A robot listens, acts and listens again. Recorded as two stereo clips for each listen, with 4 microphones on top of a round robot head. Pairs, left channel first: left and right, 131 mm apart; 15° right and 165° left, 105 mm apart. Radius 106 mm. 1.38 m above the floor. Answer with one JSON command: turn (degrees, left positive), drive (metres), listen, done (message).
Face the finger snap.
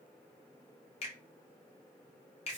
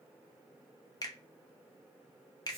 {"turn": 40}
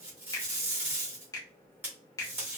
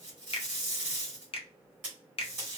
{"turn": 20}
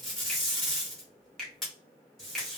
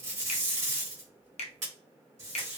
{"done": "Facing the finger snap, under 1 m away."}